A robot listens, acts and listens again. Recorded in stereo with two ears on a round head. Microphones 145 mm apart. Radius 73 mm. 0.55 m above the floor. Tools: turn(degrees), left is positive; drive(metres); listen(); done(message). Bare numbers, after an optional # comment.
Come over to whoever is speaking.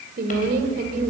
# The woman speaking: about 65° right or 115° right.
turn(-65)
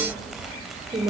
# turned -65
# So it is at 35° right.
turn(-35)
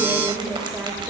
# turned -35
listen()
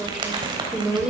drive(1.0)
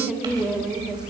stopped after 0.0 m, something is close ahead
done("Blocked. The woman speaking is further on, straight ahead.")